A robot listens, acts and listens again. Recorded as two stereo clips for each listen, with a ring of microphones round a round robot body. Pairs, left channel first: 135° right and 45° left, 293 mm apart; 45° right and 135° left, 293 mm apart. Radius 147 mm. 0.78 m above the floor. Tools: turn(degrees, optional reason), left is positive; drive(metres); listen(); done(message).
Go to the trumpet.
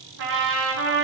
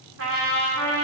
turn(degrees=90, reason="The trumpet: 90° left.")
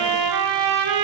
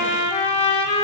turn(degrees=25, reason="The trumpet is now 25° left.")
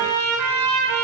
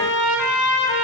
drive(metres=1.0)
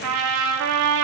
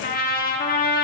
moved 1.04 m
turn(degrees=15, reason="The trumpet is now 15° left.")
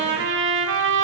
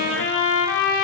drive(metres=1.0)
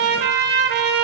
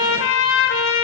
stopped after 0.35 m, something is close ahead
done("I am next to the trumpet.")